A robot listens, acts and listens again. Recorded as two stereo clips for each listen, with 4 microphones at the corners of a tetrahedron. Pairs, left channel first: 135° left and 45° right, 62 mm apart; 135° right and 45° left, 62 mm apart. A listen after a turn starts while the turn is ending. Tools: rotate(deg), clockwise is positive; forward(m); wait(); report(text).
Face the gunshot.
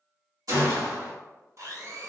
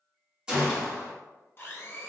rotate(35)
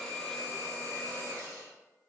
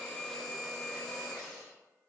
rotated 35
report("Facing where the gunshot came from. I can't hear it now.")